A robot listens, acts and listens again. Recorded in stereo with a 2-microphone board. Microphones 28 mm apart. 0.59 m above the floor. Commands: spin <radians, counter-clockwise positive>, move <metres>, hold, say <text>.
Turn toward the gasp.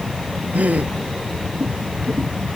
spin -1.57
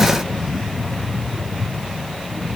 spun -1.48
say I heard a gasp from this way, but can't make it out now.